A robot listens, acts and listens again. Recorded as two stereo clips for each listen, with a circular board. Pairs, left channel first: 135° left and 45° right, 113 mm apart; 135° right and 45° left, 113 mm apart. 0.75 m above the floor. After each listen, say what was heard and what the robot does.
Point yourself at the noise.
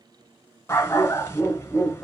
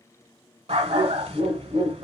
The dog barking: 65° left. Turn 65° left.
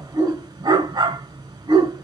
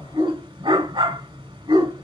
Found it: a dog barking, straight ahead.